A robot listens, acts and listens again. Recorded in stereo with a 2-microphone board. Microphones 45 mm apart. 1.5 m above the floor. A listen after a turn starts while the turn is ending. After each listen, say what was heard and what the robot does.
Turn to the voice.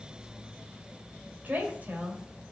The woman speaking: about 40° right or 140° right. Turn 40° right.
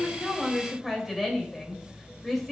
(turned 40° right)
Found it: a woman speaking, straight ahead, 2 to 4 m away.